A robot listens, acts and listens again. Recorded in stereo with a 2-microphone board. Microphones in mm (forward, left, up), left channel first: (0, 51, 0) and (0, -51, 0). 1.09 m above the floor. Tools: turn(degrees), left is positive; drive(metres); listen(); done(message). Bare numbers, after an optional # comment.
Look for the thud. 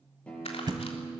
# The thud: about 45° right or 135° right.
turn(-45)
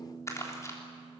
listen()
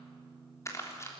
done("I heard a thud, but can't make it out now. It was about straight ahead or 90° right.")